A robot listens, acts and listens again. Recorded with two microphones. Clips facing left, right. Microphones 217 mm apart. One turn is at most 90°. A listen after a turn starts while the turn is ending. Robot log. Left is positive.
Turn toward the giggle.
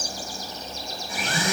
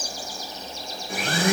cmd idle
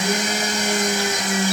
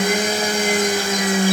cmd idle
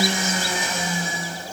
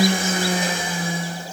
end: I can't make out a giggle, only a blender.